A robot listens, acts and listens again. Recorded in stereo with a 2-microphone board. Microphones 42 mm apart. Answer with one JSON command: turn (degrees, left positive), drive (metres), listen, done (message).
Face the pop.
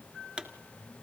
{"turn": -20}
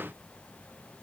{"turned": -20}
{"listen": true}
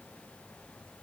{"done": "I heard a pop, but can't make it out now. It was about straight ahead or 140° right."}